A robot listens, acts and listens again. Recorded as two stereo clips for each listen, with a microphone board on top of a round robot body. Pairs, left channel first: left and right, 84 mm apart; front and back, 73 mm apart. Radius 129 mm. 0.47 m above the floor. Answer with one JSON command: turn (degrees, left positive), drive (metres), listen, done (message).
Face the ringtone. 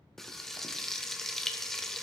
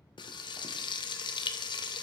{"listen": true}
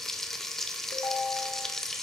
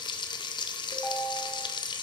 {"turn": 60}
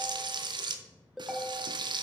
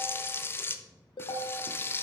{"done": "Found it: a ringtone, straight ahead."}